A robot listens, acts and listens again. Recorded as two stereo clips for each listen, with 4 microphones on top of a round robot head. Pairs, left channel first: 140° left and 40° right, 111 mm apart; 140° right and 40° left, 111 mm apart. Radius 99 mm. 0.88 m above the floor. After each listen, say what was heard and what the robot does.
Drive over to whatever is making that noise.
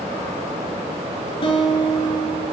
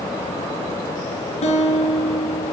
The guitar: 175° right. Turn 175° right.
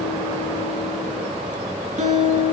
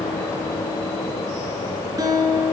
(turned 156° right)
The guitar is now 20° right. Turn 20° right.
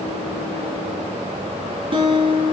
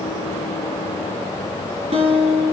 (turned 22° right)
Drive 1.0 m forward.
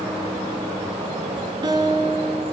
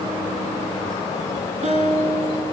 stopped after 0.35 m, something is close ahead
The guitar is now 10° left. Turn 10° left.
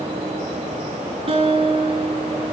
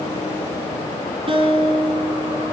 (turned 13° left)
Blocked. The guitar is further on, straight ahead.